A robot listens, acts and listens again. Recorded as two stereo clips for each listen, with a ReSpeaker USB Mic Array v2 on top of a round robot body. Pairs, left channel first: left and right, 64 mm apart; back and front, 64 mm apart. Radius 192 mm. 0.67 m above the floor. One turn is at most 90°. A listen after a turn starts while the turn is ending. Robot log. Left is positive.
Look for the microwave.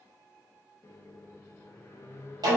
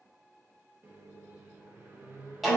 note: The microwave: 50° left.
cmd yaw +50
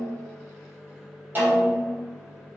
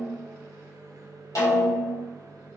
end: Facing the microwave, 1 to 2 m away.